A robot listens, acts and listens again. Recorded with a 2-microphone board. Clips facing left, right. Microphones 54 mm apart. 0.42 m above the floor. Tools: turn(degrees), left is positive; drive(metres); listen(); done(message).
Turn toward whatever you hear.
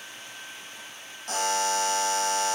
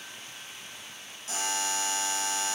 turn(degrees=55)
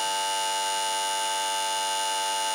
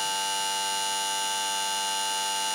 done("Found it: a buzzer, straight ahead.")